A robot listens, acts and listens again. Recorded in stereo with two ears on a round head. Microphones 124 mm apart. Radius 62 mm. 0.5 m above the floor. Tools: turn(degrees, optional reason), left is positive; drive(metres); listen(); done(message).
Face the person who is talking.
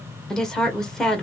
turn(degrees=30)
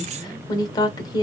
turn(degrees=145, reason="So it is at 145° left.")
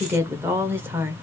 turn(degrees=-20, reason="The woman speaking is now 20° right.")
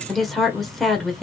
done("Found it: a woman speaking, straight ahead, 1 to 2 m away.")